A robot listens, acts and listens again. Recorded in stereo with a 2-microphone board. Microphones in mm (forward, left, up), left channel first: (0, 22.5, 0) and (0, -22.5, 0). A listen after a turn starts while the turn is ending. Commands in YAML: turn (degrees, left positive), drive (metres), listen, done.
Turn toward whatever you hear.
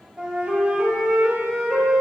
turn: -20
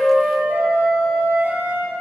turn: -145
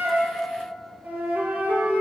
turn: -40
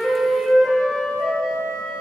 done: "Found it: a flute, straight ahead."